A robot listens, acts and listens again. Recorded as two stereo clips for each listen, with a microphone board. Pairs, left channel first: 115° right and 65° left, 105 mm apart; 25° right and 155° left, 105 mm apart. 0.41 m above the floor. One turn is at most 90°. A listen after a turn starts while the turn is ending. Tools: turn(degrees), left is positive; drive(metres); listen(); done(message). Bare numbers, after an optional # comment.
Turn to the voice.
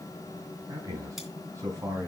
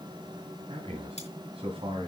# The man speaking: 130° left.
turn(90)
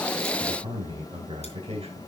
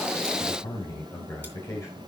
# The man speaking is now 40° left.
turn(40)
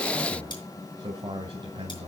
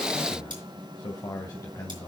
# The man speaking is now 35° left.
turn(35)
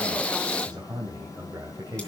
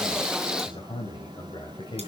done("Facing the man speaking, 2 to 4 m away.")